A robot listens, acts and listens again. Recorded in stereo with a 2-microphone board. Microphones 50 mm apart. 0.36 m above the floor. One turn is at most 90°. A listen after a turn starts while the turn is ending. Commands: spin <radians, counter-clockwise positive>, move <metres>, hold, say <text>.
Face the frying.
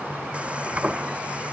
spin -0.35
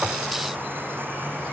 hold
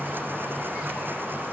hold
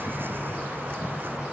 say I heard frying, but can't make it out now. It was about straight ahead or 140° right.